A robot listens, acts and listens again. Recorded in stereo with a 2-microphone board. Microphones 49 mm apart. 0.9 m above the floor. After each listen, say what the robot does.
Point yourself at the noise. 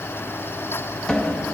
Turn 30° left.
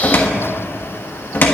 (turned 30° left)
Turn 135° left.
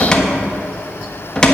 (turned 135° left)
Turn 20° left.
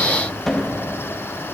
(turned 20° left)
Facing the cupboard door, 1 to 2 m away.